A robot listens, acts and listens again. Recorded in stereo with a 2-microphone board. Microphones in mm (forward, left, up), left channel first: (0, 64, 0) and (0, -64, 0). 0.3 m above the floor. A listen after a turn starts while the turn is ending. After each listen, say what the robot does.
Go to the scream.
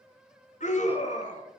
Turn 70° left.
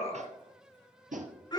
Turn 35° left.
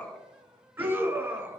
Turn 15° right.
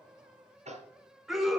Drive 1.0 m forward.
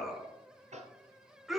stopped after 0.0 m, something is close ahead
Something is in my way. I am facing the scream but have not reached it.